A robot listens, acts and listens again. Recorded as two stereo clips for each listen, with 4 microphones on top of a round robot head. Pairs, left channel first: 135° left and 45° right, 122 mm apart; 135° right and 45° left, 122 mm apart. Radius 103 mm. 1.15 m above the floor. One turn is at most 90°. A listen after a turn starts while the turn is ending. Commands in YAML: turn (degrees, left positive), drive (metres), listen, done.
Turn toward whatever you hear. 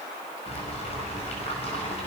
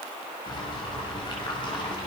turn: 90
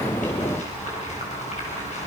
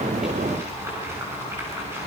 turn: 90
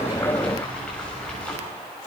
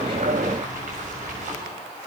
turn: 55
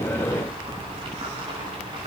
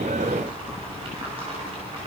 done: "Found it: boiling, straight ahead."